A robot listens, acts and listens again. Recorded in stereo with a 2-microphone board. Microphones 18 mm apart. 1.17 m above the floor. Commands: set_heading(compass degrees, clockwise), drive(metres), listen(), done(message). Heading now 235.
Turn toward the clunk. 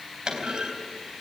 set_heading(285)
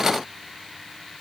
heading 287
listen()
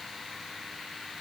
done("I heard a clunk, but can't make it out now. It was about straight ahead or 75° right.")